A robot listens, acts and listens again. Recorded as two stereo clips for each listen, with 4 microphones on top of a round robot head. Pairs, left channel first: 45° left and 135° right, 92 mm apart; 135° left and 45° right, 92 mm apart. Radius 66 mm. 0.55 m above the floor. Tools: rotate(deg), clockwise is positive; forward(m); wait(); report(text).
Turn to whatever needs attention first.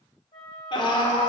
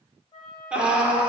rotate(-30)
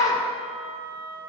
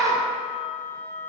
report("Found it: a scream, straight ahead, 1 to 2 m away.")